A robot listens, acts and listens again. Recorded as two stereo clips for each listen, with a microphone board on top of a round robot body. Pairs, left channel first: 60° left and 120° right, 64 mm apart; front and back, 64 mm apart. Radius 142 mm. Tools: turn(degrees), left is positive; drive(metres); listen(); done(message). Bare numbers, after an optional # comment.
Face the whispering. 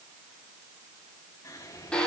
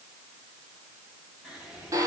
# The whispering: 100° left.
turn(100)
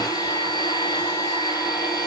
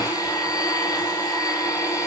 listen()
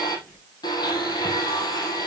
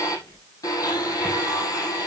done("Found it: whispering, straight ahead.")